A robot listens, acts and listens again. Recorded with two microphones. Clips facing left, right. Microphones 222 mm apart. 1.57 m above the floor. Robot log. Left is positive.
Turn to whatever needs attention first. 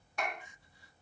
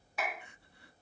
note: The crying: about 65° right or 115° right.
cmd yaw -65
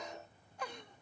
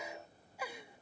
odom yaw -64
note: So it is at 10° right.
cmd yaw -10
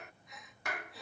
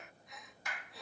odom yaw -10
end: Found it: crying, straight ahead.